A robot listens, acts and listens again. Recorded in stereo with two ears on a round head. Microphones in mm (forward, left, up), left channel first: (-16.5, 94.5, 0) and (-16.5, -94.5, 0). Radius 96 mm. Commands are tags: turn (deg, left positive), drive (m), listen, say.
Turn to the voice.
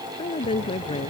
<turn deg="25"/>
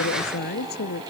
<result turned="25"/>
<turn deg="125"/>
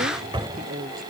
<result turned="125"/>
<turn deg="-40"/>
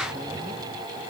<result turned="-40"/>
<listen/>
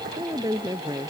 <turn deg="-15"/>
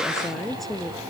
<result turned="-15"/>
<say>Facing the woman speaking.</say>